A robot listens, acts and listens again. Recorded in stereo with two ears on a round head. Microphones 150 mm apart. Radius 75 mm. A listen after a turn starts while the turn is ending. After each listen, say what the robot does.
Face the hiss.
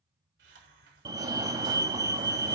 Turn 75° right.
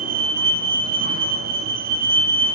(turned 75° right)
Keep listening.
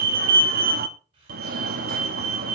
Turn 30° right.
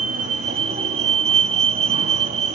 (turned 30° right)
Keep listening.
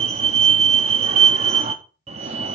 Keep listening.
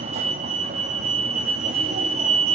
I heard a hiss from this way, but can't make it out now.